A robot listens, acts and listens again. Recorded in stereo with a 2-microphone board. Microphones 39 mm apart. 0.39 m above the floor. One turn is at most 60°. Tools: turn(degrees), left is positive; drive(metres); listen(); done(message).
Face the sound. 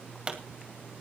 turn(degrees=-25)
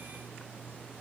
listen()
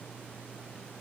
done("I heard a pop, but can't make it out now. It was about straight ahead or 130° right.")